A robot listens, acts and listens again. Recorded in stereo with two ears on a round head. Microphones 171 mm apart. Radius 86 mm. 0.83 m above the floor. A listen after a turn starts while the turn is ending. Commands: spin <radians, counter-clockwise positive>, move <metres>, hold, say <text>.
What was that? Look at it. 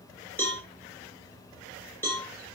spin 0.52
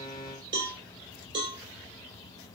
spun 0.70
spin -0.52
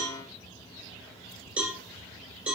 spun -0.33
say Facing the cowbell.